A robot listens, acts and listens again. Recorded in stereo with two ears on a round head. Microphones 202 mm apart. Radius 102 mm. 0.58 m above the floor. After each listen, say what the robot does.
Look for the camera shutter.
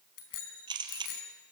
Turn 20° right.
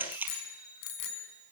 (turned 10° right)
Turn 10° right.
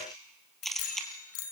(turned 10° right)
Facing the camera shutter.